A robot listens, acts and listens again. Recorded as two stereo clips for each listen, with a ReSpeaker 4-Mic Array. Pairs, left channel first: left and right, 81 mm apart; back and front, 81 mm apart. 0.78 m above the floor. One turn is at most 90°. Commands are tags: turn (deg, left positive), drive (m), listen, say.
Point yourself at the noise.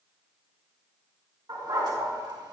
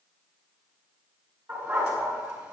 <turn deg="-50"/>
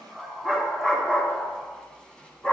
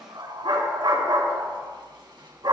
<turn deg="15"/>
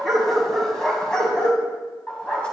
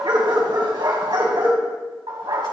<turn deg="15"/>
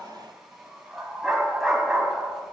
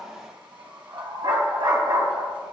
<say>Found it: a dog barking, straight ahead, 2 to 4 m away.</say>